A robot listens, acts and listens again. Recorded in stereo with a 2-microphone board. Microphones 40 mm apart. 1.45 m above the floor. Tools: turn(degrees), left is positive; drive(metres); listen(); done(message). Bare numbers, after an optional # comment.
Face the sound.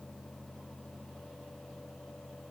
listen()
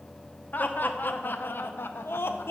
turn(90)
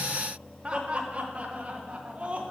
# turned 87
# So it is at 35° right.
turn(-35)
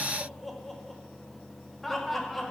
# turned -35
done("Found it: laughter, straight ahead, 1 to 2 m away.")